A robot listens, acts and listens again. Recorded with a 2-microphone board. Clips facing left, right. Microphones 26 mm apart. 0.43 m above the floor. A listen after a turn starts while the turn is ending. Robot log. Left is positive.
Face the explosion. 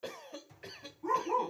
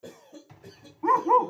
note: The explosion: about 40° right or 140° right.
cmd yaw -40
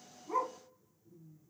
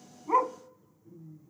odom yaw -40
cmd idle
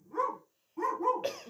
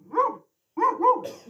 end: I heard an explosion, but can't make it out now. It was about straight ahead or 100° right.